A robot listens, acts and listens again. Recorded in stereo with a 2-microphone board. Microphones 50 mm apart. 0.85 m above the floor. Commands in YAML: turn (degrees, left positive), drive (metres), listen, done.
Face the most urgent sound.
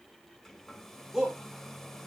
turn: -30
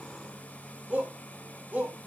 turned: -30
turn: -140
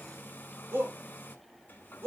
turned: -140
turn: -60
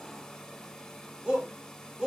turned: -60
turn: -15
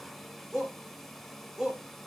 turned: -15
done: "Found it: a shout, straight ahead."